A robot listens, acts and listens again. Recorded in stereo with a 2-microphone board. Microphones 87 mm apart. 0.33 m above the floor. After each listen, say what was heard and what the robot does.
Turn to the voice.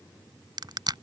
Keep listening.
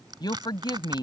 The woman speaking: about 55° left or 125° left. Turn 55° left.
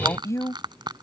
So it is at 45° left. Turn 45° left.
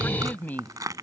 The woman speaking is now 25° left. Turn 25° left.
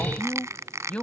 The woman speaking is now 15° left. Turn 15° left.
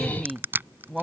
Found it: a woman speaking, straight ahead.